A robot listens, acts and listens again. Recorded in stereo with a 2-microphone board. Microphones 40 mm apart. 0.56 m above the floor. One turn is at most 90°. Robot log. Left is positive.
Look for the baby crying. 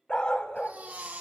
note: The baby crying: about 45° right or 135° right.
cmd yaw -45
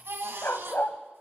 note: So it is at 85° right.
cmd yaw -85
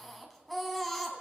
end: Found it: a baby crying, straight ahead, 2 to 4 m away.